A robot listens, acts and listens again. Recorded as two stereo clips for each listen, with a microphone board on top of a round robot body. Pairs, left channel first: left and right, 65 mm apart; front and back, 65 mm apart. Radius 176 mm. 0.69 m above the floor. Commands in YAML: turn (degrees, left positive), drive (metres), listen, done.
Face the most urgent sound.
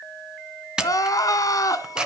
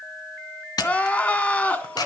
turn: 65
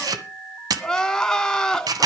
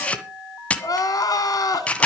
done: "Facing the crying, 2 to 4 m away."